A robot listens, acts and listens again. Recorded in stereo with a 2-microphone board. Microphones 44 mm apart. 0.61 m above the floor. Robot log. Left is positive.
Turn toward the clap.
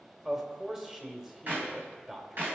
note: The clap: about 50° right or 130° right.
cmd yaw -50
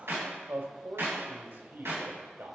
note: So it is at 75° right.
cmd yaw -75
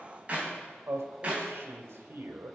note: The clap is now 30° right.
cmd yaw -30
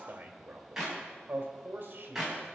note: The clap is now 10° right.
cmd yaw -10
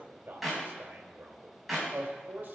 end: Facing the clap.